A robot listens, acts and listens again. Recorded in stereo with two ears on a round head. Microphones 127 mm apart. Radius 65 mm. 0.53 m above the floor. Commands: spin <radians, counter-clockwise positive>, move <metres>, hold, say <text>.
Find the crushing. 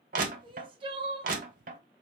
spin -1.05
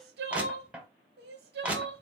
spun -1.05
spin -0.17
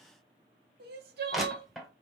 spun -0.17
say Found it: crushing, straight ahead, 1 to 2 m away.